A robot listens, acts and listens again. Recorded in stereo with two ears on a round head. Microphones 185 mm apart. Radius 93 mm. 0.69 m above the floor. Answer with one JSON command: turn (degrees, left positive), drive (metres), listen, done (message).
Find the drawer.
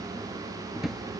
{"turn": 30}
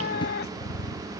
{"listen": true}
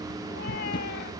{"listen": true}
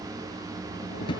{"turn": 155}
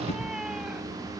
{"listen": true}
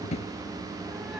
{"turn": 35}
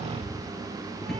{"listen": true}
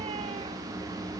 {"listen": true}
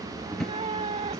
{"done": "Facing the drawer."}